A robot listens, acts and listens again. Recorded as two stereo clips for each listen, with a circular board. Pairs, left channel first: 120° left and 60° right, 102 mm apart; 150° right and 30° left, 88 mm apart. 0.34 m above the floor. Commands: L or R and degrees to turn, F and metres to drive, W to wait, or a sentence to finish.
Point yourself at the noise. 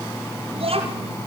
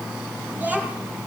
R40
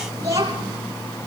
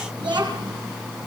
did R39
Facing the child speaking, over 4 m away.